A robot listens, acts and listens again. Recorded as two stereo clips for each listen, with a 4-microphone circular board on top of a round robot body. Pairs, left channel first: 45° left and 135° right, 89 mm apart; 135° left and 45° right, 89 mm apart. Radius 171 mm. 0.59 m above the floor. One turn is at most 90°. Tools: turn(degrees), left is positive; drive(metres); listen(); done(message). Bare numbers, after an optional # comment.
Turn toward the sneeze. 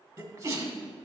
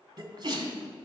# The sneeze: 85° right.
turn(-85)
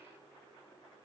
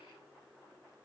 done("Facing where the sneeze came from. I can't hear it now.")